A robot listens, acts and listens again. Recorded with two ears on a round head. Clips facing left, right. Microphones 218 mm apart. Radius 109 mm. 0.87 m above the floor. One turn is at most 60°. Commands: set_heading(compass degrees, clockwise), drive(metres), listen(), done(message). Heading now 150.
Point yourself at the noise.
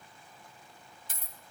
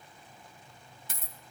set_heading(205)
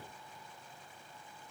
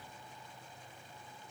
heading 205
listen()
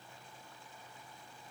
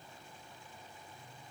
done("I heard a dropped coin, but can't make it out now. It was about straight ahead or 70° right.")